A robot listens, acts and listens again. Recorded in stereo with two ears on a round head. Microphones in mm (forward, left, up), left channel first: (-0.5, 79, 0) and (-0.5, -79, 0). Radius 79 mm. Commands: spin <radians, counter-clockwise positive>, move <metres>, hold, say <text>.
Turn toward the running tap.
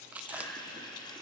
spin 0.44
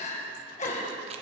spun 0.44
hold
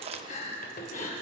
spin 2.18
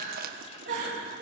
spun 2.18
hold
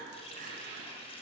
spin 0.61
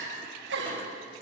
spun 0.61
hold
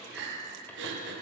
hold
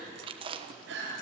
say I heard a running tap from this way, but can't make it out now.